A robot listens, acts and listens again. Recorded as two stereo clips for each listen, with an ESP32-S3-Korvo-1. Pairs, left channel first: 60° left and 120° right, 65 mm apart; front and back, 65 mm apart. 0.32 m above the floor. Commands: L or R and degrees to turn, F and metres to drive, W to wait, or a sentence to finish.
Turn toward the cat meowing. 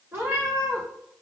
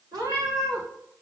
R170
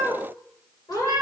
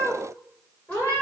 L60
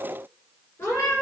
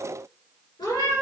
Found it: a cat meowing, straight ahead, over 4 m away.